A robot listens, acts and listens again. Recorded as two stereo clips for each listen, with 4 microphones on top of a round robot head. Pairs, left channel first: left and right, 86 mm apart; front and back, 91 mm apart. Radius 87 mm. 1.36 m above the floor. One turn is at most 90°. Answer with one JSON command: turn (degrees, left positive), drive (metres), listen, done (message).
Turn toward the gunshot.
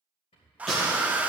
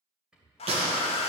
{"turn": 90}
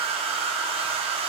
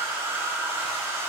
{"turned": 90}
{"turn": 90}
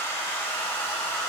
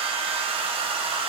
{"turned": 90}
{"done": "Facing where the gunshot came from. I can't hear it now."}